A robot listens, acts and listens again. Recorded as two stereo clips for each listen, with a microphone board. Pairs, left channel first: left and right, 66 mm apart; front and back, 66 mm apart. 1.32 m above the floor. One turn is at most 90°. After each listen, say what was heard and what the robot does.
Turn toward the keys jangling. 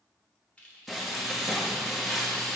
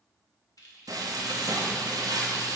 The keys jangling: 20° left. Turn 20° left.
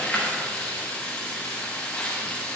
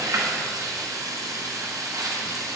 Keep listening.
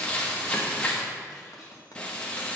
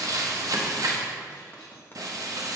Keep listening.
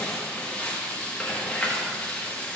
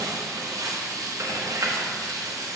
Facing where the keys jangling came from. I can't hear it now.